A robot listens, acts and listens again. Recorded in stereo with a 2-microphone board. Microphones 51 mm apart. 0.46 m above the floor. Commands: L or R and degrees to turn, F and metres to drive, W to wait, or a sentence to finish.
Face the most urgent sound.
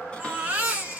R30
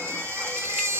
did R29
R120
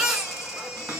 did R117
Facing the baby crying, 1 to 2 m away.